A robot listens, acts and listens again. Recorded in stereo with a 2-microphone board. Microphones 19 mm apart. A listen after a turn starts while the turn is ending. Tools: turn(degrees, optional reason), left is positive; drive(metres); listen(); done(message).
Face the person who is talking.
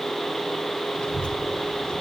turn(degrees=65, reason="The child speaking: about 65° left or 115° left.")
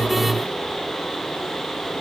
done("Facing the child speaking.")